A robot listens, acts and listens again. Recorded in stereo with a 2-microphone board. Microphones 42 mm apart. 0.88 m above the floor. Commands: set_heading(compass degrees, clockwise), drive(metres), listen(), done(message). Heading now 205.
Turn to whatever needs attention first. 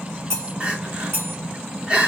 set_heading(230)
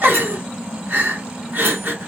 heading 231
set_heading(1)
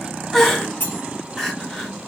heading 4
done("Facing the crying.")